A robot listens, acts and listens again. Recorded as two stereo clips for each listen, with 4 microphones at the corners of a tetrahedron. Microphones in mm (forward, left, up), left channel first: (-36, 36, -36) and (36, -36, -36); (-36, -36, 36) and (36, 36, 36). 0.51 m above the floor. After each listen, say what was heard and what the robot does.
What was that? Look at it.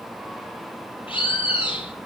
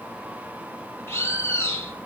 The bird: 160° left. Turn 160° left.
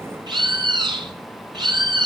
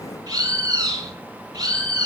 Facing the bird, over 4 m away.